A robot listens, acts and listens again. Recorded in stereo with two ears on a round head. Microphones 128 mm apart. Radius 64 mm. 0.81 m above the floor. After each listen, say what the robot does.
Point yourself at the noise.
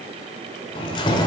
Turn 30° left.
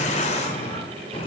Turn 40° left.
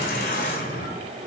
Turn 115° left.
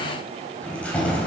Turn 10° left.
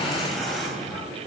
Found it: keys jangling, straight ahead.